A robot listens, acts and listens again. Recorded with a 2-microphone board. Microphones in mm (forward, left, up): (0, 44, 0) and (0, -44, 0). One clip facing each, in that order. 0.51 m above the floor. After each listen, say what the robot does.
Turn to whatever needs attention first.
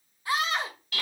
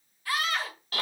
Turn 20° left.
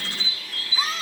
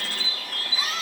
Turn 135° left.
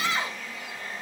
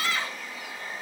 Turn 20° left.
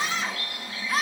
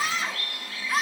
Found it: a scream, straight ahead, 1 to 2 m away.